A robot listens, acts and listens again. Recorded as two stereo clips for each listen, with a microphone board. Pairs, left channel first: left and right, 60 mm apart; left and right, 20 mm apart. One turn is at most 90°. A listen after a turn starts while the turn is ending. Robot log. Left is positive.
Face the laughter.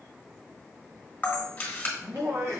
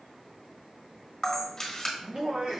note: The laughter: about 55° right or 125° right.
cmd yaw -55
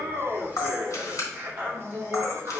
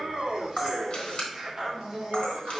note: So it is at 40° right.
cmd yaw -40
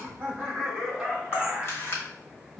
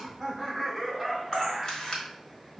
note: The laughter is now 15° right.
cmd yaw -15
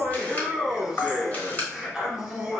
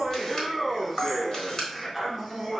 end: Facing the laughter.